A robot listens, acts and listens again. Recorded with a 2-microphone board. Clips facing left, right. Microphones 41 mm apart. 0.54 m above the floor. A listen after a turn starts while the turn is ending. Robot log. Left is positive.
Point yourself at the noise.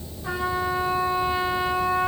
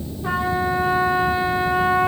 note: The trumpet: about 25° right or 155° right.
cmd yaw -25
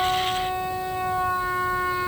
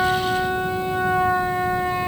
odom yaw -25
note: So it is at 130° right.
cmd yaw -130
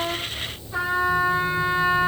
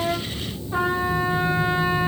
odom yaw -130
note: The trumpet is now 25° right.
cmd yaw -25
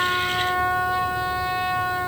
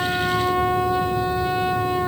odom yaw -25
note: The trumpet is now 10° right.
cmd yaw -10
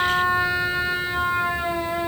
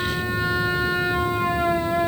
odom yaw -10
end: Found it: a trumpet, straight ahead.